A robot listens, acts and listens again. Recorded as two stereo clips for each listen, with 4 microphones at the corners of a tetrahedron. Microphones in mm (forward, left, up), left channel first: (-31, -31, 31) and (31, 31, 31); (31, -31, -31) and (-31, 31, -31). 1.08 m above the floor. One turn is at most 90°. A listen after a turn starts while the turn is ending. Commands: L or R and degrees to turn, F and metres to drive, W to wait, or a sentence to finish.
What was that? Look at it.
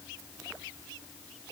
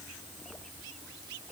W
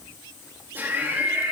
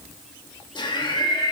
R20
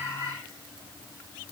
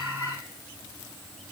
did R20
W
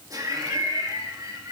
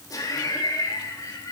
Found it: laughter, straight ahead, 2 to 4 m away.